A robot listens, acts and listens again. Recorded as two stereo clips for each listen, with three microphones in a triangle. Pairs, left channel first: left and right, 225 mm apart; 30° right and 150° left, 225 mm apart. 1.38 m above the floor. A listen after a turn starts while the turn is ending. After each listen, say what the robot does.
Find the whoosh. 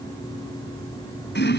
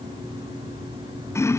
Keep listening.
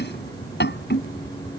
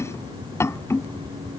Keep listening.
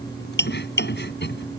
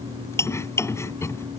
I can't make out a whoosh, only chopping.